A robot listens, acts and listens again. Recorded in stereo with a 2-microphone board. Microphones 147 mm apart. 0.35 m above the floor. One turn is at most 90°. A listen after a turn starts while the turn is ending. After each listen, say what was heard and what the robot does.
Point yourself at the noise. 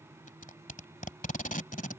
The tape being pulled: about 65° left or 115° left. Turn 65° left.
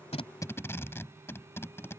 So it is at 20° left. Turn 20° left.
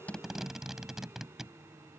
Found it: tape being pulled, straight ahead.